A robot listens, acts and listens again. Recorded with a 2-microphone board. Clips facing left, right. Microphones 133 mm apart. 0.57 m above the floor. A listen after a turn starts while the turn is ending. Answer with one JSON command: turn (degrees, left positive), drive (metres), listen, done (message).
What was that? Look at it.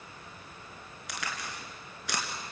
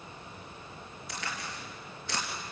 {"turn": 90}
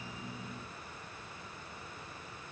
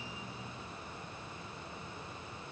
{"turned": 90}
{"done": "Facing where the crack came from. I can't hear it now."}